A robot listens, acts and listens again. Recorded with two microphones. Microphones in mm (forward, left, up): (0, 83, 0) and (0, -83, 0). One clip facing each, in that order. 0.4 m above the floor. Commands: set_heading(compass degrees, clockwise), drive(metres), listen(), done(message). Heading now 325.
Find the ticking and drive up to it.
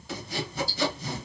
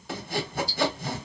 set_heading(295)
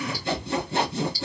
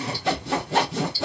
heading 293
set_heading(323)
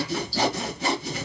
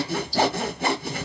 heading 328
drive(1.0)
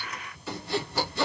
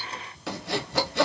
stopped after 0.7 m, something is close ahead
listen()
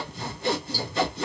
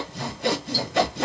listen()
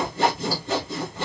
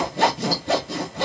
done("I heard ticking from this way, but can't make it out now. I did not reach it.")